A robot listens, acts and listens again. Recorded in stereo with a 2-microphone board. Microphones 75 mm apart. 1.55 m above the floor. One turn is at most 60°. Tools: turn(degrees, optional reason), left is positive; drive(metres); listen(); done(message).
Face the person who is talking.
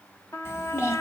turn(degrees=40, reason="The child speaking: about 40° left or 140° left.")
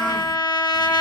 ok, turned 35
listen()
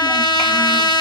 listen()
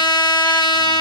done("I heard a child speaking, but can't make it out now. It was about 5° left or 105° left.")